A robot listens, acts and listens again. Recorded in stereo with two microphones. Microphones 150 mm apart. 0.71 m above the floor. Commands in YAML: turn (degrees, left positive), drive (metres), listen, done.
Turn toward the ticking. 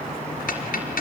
turn: 70
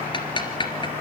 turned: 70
turn: 35
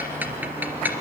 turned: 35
turn: -10
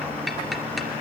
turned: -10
done: "Facing the ticking."